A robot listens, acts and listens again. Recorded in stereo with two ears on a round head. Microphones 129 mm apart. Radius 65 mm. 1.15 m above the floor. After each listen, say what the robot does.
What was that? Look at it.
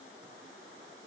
Keep listening.
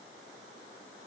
Keep listening.
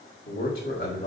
Turn 90° left.
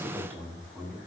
Turn 15° left.
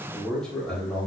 Facing the man speaking, over 4 m away.